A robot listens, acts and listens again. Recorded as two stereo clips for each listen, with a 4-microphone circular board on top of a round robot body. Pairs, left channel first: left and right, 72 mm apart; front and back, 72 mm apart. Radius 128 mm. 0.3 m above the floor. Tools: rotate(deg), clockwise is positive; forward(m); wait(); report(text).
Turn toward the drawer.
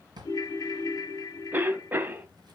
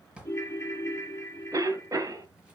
rotate(105)
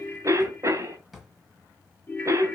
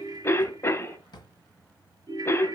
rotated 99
report("Facing the drawer.")